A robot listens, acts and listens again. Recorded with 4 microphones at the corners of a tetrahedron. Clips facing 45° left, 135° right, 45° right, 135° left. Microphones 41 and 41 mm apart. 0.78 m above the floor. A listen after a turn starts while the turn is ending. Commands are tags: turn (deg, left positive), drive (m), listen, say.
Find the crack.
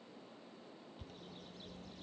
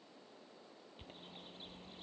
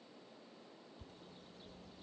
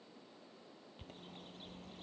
<listen/>
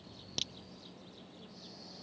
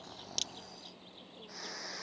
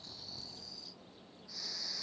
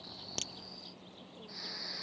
<turn deg="125"/>
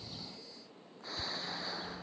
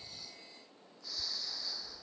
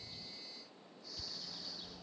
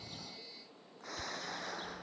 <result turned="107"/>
<turn deg="20"/>
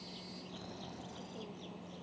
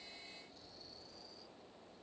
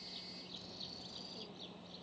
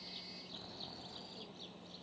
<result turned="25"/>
<say>Facing where the crack came from. I can't hear it now.</say>